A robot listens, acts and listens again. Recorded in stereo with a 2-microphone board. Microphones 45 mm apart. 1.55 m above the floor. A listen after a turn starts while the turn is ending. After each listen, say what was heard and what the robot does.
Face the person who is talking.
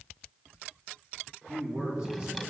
The man speaking: about 30° right or 150° right. Turn 30° right.
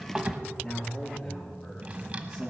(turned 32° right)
So it is at 15° right. Turn 15° right.
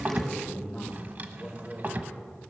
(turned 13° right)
The man speaking is now 10° right. Turn 10° right.
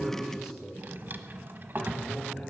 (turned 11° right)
Found it: a man speaking, straight ahead, over 4 m away.